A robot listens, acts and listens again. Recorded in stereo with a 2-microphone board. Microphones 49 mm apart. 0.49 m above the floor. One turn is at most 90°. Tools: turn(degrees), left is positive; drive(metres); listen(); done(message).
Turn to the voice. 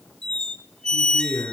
turn(degrees=90)
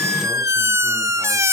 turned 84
listen()
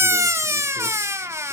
listen()
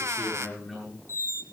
turn(degrees=10)
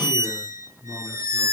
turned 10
done("Found it: a man speaking, straight ahead, over 4 m away.")